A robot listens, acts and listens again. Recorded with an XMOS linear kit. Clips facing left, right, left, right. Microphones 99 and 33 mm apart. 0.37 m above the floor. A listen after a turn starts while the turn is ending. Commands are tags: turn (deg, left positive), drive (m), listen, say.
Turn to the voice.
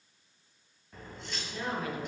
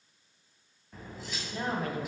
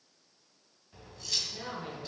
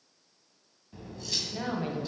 <turn deg="-40"/>
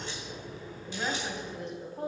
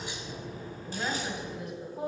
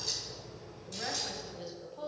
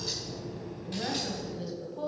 <say>Found it: a woman speaking, straight ahead, 2 to 4 m away.</say>